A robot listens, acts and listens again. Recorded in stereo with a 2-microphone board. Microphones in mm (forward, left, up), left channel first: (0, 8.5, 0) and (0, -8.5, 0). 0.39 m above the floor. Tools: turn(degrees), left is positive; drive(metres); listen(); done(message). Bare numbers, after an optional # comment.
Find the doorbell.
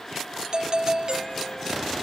# The doorbell: about 45° right or 135° right.
turn(-45)
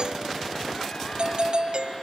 # So it is at 85° right.
turn(-85)
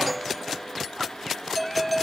done("Facing the doorbell.")